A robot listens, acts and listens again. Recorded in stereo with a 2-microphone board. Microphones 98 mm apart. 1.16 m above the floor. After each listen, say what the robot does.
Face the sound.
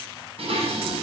Turn 90° right.
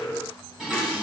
Turn 10° right.
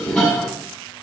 Found it: dishes clattering, straight ahead.